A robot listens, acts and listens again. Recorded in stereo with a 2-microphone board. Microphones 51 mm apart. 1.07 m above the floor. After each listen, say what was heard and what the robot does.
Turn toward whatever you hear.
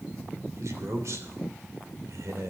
The man speaking: about 75° right or 105° right. Turn 75° right.
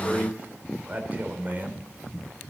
So it is at 35° right. Turn 35° right.
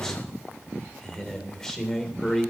The man speaking is now 10° left. Turn 10° left.
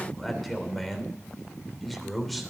Found it: a man speaking, straight ahead.